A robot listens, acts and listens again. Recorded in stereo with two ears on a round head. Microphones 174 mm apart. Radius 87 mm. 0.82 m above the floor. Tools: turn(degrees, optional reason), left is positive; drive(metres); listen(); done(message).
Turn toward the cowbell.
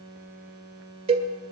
turn(degrees=-30, reason="The cowbell: about 30° right or 150° right.")
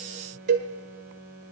turn(degrees=-120, reason="So it is at 120° right.")
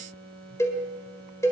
turn(degrees=15, reason="The cowbell is now 15° left.")
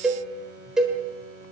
done("Facing the cowbell, 1 to 2 m away.")